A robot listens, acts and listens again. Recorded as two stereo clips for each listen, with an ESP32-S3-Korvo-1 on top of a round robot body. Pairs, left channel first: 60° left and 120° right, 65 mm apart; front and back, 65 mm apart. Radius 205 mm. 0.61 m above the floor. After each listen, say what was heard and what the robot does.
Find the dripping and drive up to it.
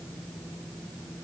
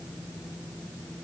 Keep listening.
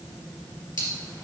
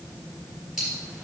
The dripping: 95° left. Turn 95° left.
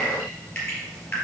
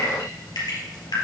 The dripping is now 10° right. Turn 10° right.
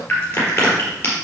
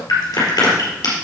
Drive 1.0 m forward.
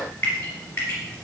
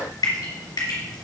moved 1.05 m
Drive 1.0 m forward.
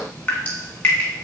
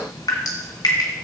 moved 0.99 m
The dripping is now 10° right. Turn 10° right.
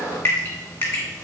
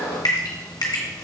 Drive 1.0 m forward.
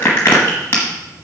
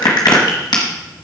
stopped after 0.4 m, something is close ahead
I am next to the dripping.